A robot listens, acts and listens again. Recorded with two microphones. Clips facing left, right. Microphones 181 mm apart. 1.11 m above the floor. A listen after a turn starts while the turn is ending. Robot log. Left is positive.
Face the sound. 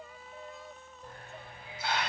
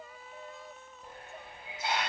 note: The hiss: about 25° right or 155° right.
cmd yaw -25
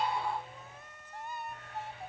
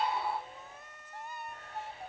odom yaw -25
note: So it is at 130° right.
cmd yaw -130
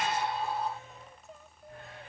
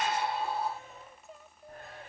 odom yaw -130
note: The hiss is now 55° right.
cmd yaw -55
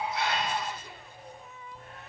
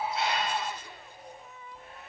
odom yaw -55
end: Facing the hiss, 1 to 2 m away.